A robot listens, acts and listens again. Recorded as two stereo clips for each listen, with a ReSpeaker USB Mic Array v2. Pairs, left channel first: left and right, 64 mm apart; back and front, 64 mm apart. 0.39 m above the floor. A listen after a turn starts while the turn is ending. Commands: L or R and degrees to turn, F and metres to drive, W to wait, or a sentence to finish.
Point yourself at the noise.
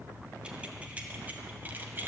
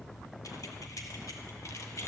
R145
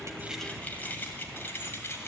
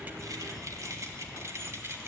L45
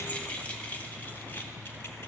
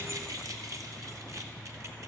L30
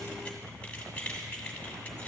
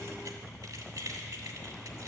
L20
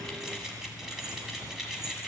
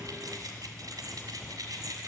Facing the keys jangling.